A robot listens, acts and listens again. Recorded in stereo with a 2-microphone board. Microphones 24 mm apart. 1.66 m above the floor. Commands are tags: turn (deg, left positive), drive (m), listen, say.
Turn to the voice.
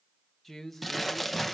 <turn deg="30"/>
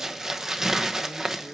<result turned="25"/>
<listen/>
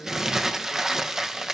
<listen/>
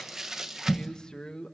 <turn deg="145"/>
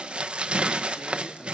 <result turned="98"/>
<turn deg="50"/>
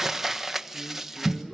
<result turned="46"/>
<listen/>
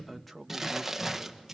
<say>Facing the man speaking.</say>